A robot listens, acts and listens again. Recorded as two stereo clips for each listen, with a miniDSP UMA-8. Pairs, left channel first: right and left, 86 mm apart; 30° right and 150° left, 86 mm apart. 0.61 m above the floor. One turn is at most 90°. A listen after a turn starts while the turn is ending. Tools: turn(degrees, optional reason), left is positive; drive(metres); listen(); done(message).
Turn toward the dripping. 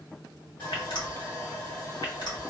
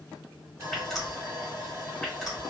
turn(degrees=-90, reason="The dripping: 115° right.")
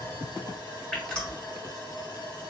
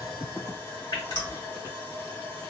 turn(degrees=-10, reason="The dripping is now 10° right.")
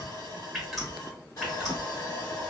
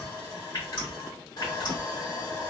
done("Found it: dripping, straight ahead, 1 to 2 m away.")